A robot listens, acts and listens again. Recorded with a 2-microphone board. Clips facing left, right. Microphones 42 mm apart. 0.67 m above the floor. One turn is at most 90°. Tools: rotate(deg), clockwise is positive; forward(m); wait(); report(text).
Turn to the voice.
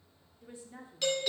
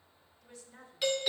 rotate(-25)
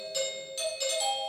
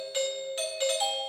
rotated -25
wait()
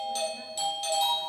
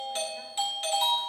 wait()
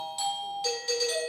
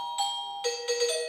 report("I heard a woman speaking, but can't make it out now. It was about straight ahead or 130° left.")